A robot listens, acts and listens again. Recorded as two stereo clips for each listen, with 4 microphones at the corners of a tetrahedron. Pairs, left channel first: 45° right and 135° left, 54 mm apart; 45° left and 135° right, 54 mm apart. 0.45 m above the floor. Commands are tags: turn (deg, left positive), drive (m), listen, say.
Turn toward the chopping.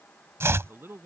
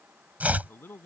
<turn deg="170"/>
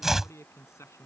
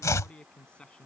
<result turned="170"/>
<turn deg="50"/>
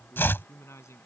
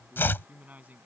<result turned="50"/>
<say>Found it: chopping, straight ahead.</say>